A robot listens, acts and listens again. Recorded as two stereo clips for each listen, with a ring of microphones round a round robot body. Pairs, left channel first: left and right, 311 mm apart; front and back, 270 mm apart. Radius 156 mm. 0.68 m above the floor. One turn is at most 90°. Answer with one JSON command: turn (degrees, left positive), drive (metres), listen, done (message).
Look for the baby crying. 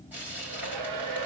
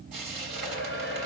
{"listen": true}
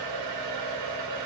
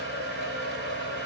{"listen": true}
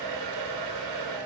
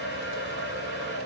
{"done": "I can't make out a baby crying to turn to."}